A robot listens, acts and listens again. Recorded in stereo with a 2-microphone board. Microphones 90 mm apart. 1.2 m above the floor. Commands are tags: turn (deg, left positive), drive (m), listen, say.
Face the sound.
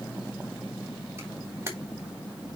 <turn deg="-25"/>
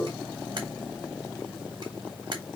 <turn deg="-130"/>
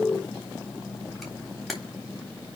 <say>Facing the camera shutter.</say>